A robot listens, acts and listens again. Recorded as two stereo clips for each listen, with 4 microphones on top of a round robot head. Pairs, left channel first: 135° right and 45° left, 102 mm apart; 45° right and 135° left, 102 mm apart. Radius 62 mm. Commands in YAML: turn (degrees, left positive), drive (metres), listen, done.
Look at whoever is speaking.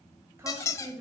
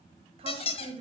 turn: 105
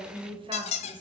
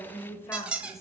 turn: 10
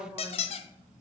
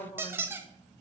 done: "Found it: a woman speaking, straight ahead, 2 to 4 m away."